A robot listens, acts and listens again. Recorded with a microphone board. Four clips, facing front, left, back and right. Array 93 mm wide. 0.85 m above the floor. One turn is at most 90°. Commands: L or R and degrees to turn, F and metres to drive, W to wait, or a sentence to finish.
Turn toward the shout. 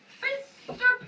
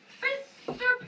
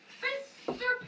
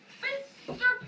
L60
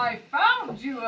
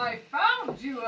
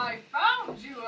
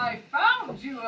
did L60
L10
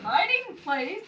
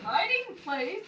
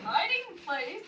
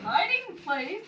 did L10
Found it: a shout, straight ahead, 1 to 2 m away.